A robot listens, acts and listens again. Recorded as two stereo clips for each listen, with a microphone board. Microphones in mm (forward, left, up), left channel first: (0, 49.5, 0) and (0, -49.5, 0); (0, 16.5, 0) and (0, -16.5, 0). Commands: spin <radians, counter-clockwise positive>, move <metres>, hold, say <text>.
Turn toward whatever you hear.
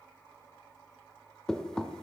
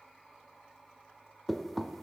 spin 0.52
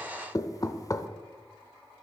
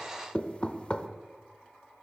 spin 2.44
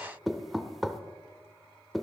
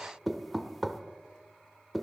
say Facing the knocking, under 1 m away.